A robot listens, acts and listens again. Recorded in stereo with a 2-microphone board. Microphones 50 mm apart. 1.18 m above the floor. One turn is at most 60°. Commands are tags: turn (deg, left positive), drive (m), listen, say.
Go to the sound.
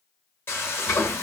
<turn deg="50"/>
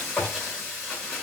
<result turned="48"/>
<drive m="1.0"/>
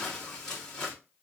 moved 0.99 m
<turn deg="10"/>
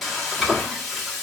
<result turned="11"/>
<drive m="1.0"/>
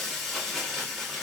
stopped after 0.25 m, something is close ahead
<say>I am next to the frying.</say>